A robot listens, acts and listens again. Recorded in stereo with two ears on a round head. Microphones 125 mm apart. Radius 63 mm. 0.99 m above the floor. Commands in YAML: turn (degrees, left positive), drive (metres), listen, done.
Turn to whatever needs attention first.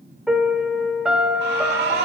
turn: -90
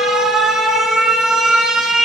done: "Facing the alarm."